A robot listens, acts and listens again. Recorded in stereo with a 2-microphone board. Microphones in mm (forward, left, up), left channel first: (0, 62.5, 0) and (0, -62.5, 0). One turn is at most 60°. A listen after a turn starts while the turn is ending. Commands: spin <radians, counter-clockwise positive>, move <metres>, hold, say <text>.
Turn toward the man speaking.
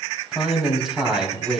spin -0.52
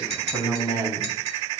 spin -1.05
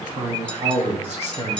spin -1.05
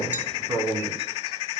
spin -0.61
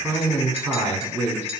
spin -0.26
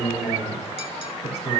say Found it: a man speaking, straight ahead, over 4 m away.